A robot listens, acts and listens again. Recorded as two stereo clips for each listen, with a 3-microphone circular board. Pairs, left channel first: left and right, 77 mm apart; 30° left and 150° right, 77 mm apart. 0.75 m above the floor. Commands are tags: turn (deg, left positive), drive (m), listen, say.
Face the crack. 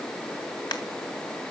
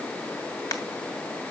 <turn deg="70"/>
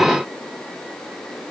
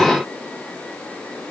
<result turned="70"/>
<say>I heard a crack from this way, but can't make it out now.</say>